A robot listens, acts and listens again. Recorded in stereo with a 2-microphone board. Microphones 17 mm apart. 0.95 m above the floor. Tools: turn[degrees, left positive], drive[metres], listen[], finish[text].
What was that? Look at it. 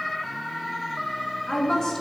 Thought: The woman speaking: about 35° left or 145° left.
Action: turn[35]
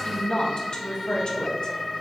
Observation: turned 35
Thought: So it is at 105° left.
Action: turn[105]
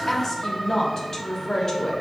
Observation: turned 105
Thought: The woman speaking is now 35° left.
Action: turn[35]
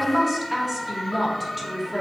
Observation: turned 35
Action: finish[Found it: a woman speaking, straight ahead, 1 to 2 m away.]